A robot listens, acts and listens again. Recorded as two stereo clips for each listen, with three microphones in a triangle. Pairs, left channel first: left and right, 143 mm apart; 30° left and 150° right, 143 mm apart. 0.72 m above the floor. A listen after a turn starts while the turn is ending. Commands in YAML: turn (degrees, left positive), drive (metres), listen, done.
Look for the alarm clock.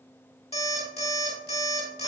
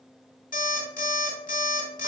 turn: 50
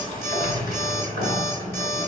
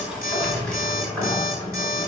listen: true
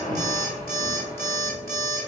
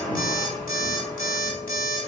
turn: 15
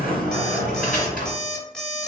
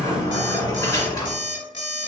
done: "Found it: an alarm clock, straight ahead."